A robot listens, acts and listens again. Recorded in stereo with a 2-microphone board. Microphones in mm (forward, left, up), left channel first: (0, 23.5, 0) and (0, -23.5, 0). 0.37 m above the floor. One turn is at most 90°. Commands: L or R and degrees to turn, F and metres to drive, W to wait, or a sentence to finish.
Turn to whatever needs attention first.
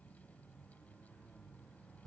W
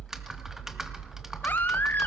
L40
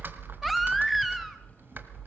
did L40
Found it: a baby crying, straight ahead.